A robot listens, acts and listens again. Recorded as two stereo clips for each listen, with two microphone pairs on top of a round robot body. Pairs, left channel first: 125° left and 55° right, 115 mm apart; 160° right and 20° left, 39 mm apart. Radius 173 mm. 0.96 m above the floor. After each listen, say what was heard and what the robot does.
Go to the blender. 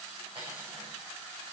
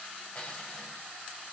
Keep listening.
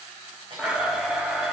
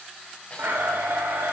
The blender: 30° left. Turn 30° left.
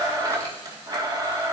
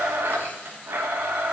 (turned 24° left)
Drive 1.0 m forward.
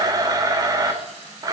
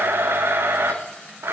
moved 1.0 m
Drive 1.0 m forward.
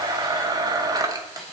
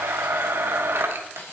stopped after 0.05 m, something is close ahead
Arrived at the blender, straight ahead.